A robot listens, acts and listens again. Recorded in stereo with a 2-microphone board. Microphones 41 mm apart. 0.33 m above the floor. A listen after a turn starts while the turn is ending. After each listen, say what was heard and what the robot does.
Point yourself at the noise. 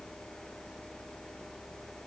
Keep listening.
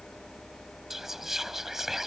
Turn 30° right.
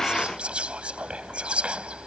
So it is at 140° right. Turn 140° right.
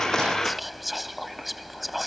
Found it: whispering, straight ahead.